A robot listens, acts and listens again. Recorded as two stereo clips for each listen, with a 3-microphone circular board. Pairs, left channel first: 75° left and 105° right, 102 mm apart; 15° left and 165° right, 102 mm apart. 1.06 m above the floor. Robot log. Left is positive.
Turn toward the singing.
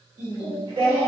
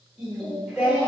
note: The singing: 90° right.
cmd yaw -90
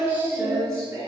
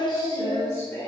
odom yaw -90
note: The singing is now 55° right.
cmd yaw -55
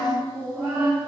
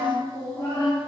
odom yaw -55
note: The singing is now 25° right.
cmd yaw -25
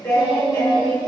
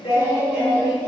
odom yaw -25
note: The singing is now 10° right.
cmd yaw -10
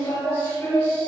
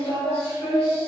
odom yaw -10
end: Facing the singing.